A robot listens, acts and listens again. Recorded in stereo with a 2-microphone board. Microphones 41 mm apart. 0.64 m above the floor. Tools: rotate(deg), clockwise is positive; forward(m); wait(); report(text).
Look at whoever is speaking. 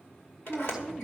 rotate(30)
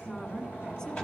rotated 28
rotate(-25)
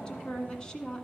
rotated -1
rotate(-25)
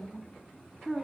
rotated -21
report("Facing the woman speaking.")